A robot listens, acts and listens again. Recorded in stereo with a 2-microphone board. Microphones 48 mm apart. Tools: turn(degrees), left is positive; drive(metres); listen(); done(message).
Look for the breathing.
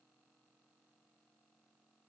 listen()
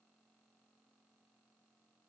listen()
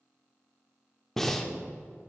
turn(degrees=30)
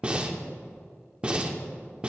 turn(degrees=-20)
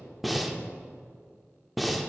done("Found it: breathing, straight ahead, under 1 m away.")